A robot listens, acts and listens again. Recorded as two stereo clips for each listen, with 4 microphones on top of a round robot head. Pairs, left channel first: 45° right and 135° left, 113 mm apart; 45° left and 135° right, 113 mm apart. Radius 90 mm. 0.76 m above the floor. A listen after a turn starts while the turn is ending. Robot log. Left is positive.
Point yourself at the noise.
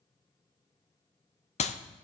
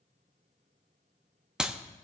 note: The clap: 50° right.
cmd yaw -50
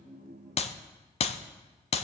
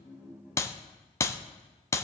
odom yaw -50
note: The clap is now 20° right.
cmd yaw -20
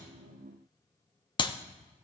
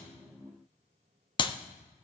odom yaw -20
end: Facing the clap.